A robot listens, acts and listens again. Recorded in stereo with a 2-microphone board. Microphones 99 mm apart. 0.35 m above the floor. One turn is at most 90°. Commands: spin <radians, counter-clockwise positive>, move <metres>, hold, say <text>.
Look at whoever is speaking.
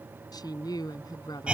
spin 0.79
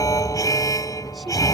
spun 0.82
hold
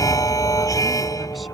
hold
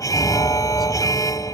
say I heard a woman speaking, but can't make it out now. It was about 5° right or 90° left.